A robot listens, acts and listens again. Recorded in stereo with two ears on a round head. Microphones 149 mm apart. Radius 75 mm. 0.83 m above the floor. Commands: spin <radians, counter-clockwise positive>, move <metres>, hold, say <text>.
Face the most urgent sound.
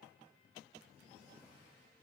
hold
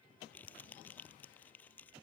hold
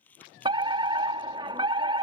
spin -0.52
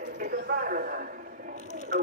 spin -1.92
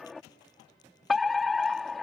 say Facing the fire alarm.